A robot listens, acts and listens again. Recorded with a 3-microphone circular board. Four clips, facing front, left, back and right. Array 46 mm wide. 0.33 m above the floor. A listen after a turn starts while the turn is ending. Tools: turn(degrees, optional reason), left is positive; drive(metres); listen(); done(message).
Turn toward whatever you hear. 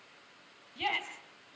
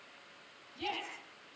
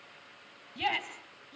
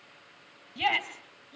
turn(degrees=-115, reason="The shout: 115° right.")
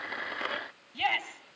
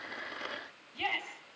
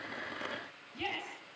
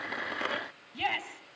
turn(degrees=-35, reason="The shout is now 35° right.")
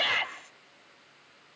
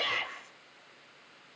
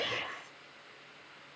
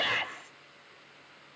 turn(degrees=-30, reason="The shout is now 30° right.")
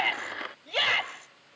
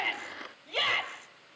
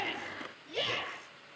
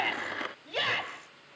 turn(degrees=-10, reason="The shout is now 10° right.")
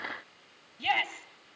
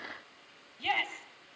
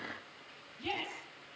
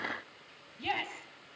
done("Found it: a shout, straight ahead.")